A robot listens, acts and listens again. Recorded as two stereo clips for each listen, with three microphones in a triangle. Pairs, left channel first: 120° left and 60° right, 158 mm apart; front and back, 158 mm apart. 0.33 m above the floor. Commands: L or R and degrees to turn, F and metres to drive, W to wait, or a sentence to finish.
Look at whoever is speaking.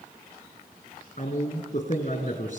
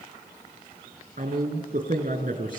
L150
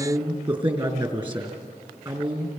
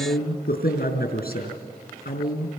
Found it: a man speaking, straight ahead.